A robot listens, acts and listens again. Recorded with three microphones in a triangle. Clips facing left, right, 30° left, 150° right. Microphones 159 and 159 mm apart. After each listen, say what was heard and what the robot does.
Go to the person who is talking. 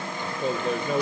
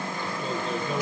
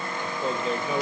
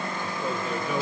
The man speaking: 95° left. Turn 95° left.
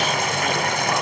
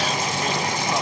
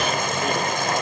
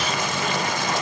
Keep listening.
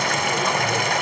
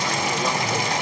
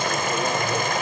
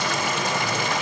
Keep listening.
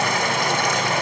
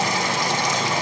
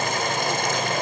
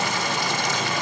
I heard a man speaking from this way, but can't make it out now. I did not reach it.